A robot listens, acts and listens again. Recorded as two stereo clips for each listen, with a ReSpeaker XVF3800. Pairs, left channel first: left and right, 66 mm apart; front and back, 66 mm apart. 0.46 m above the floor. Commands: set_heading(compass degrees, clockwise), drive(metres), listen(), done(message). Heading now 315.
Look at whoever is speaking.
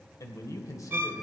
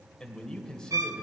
set_heading(235)
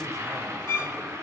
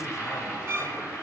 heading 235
listen()
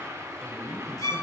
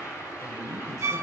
listen()
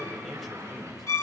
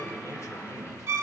done("Found it: a man speaking, straight ahead, 1 to 2 m away.")